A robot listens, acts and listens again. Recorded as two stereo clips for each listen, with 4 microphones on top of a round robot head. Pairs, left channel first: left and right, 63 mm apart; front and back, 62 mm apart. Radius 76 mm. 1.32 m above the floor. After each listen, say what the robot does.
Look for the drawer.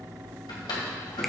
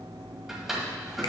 Turn 95° left.
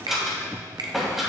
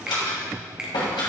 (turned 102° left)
Facing the drawer, 2 to 4 m away.